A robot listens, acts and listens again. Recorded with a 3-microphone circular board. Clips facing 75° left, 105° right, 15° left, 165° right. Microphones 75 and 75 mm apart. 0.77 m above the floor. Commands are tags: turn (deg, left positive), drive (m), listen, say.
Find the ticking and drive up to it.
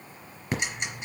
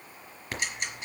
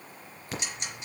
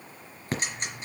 <turn deg="145"/>
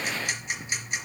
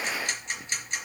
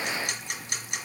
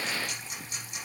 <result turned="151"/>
<drive m="1.0"/>
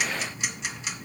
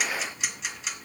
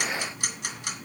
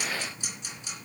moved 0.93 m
<turn deg="-15"/>
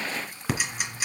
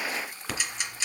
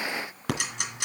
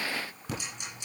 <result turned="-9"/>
<drive m="1.0"/>
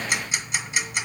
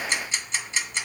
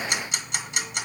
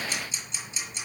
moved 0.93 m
<drive m="1.0"/>
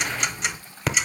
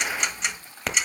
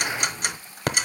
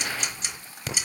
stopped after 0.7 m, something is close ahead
<turn deg="-15"/>
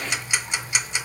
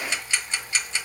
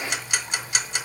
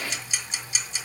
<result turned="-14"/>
<say>Arrived at the ticking, straight ahead.</say>